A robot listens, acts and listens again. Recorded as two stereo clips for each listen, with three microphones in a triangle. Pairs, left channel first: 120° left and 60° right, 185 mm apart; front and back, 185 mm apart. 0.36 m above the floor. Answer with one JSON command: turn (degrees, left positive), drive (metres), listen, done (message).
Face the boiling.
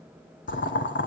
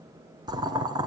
{"turn": 115}
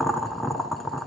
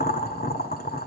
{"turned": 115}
{"turn": 30}
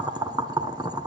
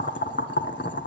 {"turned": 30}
{"turn": 10}
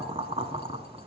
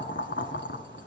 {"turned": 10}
{"done": "Facing the boiling, under 1 m away."}